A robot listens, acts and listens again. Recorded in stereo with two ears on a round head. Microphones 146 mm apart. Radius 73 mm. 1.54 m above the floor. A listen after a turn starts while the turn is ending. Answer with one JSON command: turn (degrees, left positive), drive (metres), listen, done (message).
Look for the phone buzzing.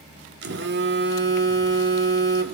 {"turn": -90}
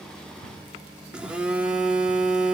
{"done": "Found it: a phone buzzing, straight ahead, 2 to 4 m away."}